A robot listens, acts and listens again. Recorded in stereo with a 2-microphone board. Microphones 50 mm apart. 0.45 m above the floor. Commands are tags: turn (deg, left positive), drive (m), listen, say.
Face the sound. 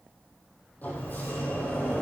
<turn deg="35"/>
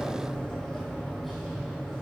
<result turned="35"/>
<say>Found it: a sliding door, straight ahead.</say>